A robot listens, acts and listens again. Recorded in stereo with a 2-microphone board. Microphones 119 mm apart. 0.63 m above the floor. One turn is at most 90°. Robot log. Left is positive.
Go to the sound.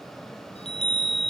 note: The chime: about 60° left or 120° left.
cmd yaw +60
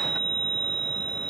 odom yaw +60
note: So it is at 60° left.
cmd yaw +60
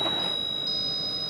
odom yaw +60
cmd fwd 1.0
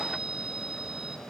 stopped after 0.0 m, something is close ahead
end: Blocked. The chime is further on, straight ahead.